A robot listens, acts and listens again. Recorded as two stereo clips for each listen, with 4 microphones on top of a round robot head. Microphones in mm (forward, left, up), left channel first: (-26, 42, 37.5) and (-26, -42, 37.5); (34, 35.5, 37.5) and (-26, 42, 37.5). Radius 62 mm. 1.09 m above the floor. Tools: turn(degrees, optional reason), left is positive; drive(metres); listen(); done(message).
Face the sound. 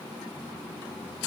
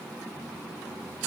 listen()
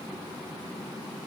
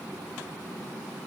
listen()
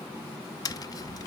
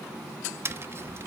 turn(degrees=130, reason="The tapping: 130° left.")
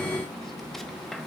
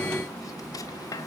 done("Found it: tapping, straight ahead, under 1 m away.")